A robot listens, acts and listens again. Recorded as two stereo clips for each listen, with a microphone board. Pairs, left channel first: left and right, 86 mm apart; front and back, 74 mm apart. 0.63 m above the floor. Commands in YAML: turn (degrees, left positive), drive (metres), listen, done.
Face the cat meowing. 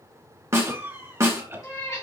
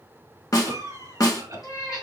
turn: 45
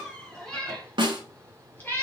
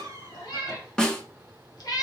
turn: 25
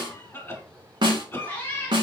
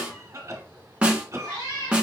turn: 30
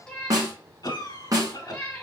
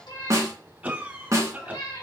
turn: 10
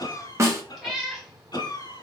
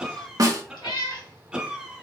done: "Facing the cat meowing."